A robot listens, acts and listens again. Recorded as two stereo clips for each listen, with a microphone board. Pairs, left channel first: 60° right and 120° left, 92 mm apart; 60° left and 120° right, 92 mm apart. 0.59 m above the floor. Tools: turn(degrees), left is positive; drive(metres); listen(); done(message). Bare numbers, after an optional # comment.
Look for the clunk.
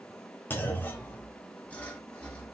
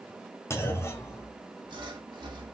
done("Facing the clunk.")